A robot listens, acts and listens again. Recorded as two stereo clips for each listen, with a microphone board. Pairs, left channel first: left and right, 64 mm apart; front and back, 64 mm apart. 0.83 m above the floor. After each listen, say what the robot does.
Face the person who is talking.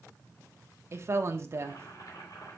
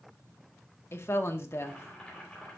Turn 45° right.
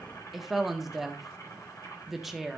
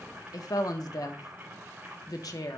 Found it: a woman speaking, straight ahead, 1 to 2 m away.